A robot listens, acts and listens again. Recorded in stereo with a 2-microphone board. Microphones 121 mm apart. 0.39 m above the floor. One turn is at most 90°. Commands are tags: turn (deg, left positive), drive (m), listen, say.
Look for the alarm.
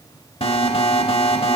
<turn deg="55"/>
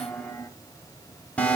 <turn deg="15"/>
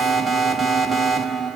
<say>Found it: an alarm, straight ahead.</say>